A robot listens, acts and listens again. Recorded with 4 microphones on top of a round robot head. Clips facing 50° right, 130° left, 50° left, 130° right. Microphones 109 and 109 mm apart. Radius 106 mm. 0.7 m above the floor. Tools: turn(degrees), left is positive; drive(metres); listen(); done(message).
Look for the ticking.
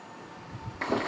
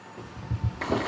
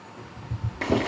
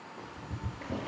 turn(degrees=145)
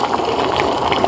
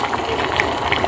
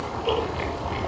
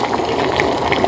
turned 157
turn(degrees=-10)
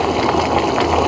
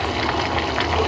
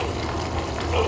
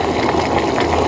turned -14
listen()
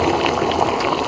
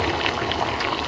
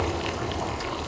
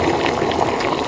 done("I heard ticking from this way, but can't make it out now.")